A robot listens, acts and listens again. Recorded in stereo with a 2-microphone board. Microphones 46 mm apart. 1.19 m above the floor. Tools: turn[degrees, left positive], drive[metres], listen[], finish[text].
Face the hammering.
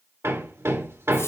Action: turn[-90]
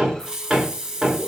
Action: finish[Facing the hammering.]